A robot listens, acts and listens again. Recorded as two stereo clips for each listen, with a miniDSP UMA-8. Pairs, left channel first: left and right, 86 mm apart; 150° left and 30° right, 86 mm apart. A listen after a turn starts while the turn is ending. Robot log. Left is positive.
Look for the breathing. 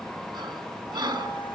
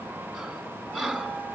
note: The breathing: 125° right.
cmd yaw -125
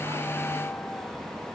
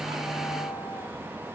cmd idle
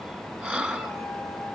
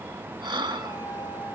note: The breathing is now 25° right.
cmd yaw -25
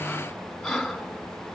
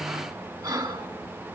end: Found it: breathing, straight ahead.